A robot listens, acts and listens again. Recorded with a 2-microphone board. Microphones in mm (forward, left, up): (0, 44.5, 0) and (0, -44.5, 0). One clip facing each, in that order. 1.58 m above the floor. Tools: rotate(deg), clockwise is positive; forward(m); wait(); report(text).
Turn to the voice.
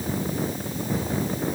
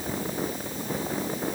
wait()
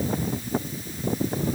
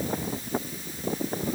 wait()
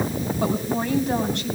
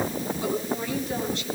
rotate(-70)
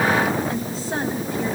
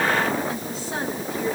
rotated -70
rotate(-40)
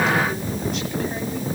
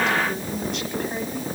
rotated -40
wait()
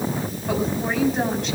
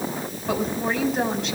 report("Facing the woman speaking.")